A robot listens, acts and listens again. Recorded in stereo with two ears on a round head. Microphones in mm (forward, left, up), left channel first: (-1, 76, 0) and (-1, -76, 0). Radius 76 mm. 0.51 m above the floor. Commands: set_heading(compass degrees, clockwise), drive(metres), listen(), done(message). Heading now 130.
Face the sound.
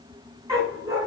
set_heading(150)
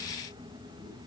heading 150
listen()
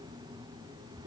listen()
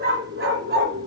set_heading(265)
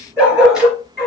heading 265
done("Found it: a dog barking, straight ahead.")